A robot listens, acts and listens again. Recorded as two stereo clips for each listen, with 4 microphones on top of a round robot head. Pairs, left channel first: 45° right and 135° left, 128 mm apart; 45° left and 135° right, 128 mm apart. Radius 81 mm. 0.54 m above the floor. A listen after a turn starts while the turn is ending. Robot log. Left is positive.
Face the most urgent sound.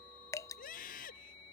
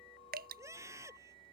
note: The scream: 65° right.
cmd yaw -65
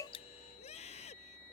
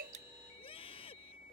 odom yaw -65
end: Facing the scream.